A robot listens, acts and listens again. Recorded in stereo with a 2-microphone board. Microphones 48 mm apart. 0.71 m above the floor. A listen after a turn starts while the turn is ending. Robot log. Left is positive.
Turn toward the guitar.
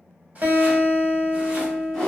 note: The guitar: about 35° right or 145° right.
cmd yaw -35
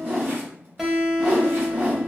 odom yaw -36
end: Facing the guitar.